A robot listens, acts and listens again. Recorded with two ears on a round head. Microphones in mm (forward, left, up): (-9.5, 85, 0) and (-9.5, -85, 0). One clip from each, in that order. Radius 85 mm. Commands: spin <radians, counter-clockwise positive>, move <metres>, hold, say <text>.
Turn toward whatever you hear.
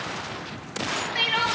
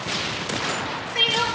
spin 0.61
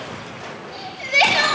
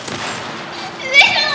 say Found it: crying, straight ahead, over 4 m away.